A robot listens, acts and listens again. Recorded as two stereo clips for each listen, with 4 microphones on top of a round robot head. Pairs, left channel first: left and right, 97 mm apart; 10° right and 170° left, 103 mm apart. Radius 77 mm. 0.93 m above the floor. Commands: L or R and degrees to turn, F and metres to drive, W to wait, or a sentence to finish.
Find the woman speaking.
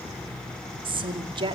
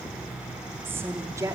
R120
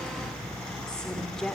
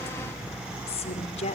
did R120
Facing the woman speaking, 2 to 4 m away.